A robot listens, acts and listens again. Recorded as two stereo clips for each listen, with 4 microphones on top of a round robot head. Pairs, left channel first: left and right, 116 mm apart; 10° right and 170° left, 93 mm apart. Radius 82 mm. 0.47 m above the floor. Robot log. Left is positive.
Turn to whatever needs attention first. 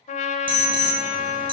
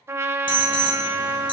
note: The alarm: 40° right.
cmd yaw -40
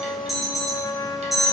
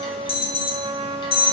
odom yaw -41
end: Facing the alarm, 1 to 2 m away.